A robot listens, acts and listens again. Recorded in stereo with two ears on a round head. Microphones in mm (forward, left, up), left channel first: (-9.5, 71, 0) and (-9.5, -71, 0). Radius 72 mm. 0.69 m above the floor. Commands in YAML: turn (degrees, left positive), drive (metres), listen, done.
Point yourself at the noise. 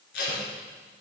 turn: 75
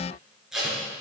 done: "Found it: tape being pulled, straight ahead, 2 to 4 m away."